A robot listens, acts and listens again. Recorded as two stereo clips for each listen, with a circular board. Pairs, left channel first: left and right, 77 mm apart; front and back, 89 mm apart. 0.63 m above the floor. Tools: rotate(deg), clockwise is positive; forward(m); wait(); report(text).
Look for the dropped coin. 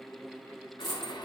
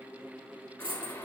rotate(-175)
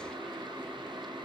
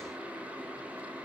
report("I heard a dropped coin from this way, but can't make it out now.")